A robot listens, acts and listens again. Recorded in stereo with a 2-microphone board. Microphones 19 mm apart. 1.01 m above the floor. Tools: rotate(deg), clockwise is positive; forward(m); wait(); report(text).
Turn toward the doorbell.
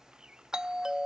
rotate(40)
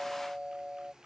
rotate(100)
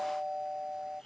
rotate(25)
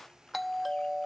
report("Facing the doorbell.")